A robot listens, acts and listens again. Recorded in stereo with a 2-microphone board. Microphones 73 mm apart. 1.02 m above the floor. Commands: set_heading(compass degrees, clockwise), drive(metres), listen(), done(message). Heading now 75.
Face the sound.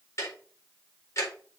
set_heading(35)
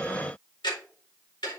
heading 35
set_heading(295)
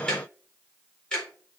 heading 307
set_heading(297)
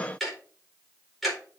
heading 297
done("Facing the ticking.")